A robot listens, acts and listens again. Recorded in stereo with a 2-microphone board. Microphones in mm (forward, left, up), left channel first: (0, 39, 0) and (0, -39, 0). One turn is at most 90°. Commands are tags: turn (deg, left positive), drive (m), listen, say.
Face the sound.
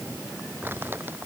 <turn deg="-30"/>
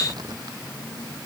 <listen/>
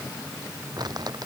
<turn deg="-90"/>
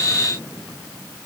<turn deg="-30"/>
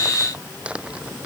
<turn deg="-15"/>
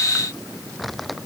<say>Facing the crumpling.</say>